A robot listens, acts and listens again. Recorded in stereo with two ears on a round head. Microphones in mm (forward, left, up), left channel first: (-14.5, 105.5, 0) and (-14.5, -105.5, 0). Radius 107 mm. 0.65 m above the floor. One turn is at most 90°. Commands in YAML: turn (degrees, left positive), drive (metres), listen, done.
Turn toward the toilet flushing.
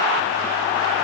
listen: true
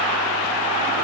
listen: true
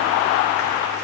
done: "I can't make out a toilet flushing."